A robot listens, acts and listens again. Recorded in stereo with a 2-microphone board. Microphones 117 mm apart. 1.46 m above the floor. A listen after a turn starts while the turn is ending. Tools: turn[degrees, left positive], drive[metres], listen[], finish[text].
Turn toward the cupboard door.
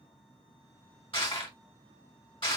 Action: listen[]
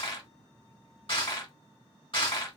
Action: listen[]
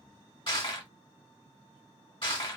Action: finish[I can't make out a cupboard door, only crushing.]